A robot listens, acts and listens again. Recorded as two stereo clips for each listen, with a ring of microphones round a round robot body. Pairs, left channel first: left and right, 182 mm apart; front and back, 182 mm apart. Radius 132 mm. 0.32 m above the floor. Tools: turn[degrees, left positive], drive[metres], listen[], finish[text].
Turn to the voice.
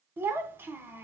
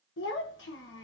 Thought: The child speaking: 10° right.
Action: turn[-10]
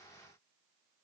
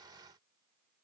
Action: listen[]
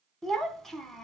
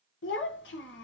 Action: finish[Facing the child speaking, 1 to 2 m away.]